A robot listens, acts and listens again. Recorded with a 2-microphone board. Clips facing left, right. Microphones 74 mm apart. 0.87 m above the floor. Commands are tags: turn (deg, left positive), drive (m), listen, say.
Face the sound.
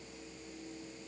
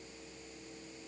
<listen/>
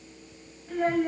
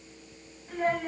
<turn deg="30"/>
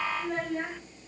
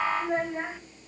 <turn deg="-20"/>
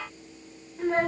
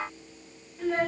<turn deg="35"/>
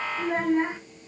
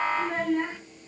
<turn deg="15"/>
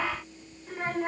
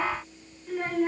<turn deg="10"/>
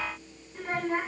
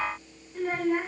<say>Found it: a child speaking, straight ahead, 1 to 2 m away.</say>